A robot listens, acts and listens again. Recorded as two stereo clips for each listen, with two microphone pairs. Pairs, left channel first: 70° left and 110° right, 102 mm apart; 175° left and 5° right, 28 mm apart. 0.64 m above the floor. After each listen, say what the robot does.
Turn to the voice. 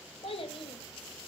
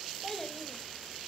Turn 95° left.
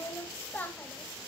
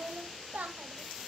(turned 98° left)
Facing the child speaking.